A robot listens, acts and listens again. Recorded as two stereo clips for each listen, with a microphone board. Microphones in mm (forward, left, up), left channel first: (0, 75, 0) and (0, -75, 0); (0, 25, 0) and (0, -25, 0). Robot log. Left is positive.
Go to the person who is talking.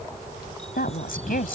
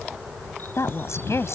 cmd yaw +90
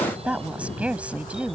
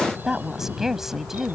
note: So it is at 10° right.
cmd yaw -10
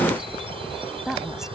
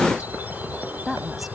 cmd fwd 1.0
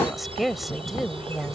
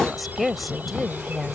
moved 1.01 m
cmd fwd 1.0
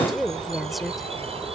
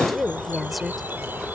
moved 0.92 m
cmd fwd 1.0
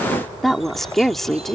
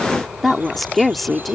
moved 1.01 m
cmd fwd 1.0
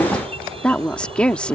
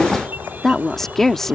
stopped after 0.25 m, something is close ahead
note: The woman speaking is now 10° left.
cmd yaw +10
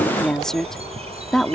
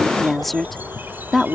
end: Arrived at the woman speaking, straight ahead.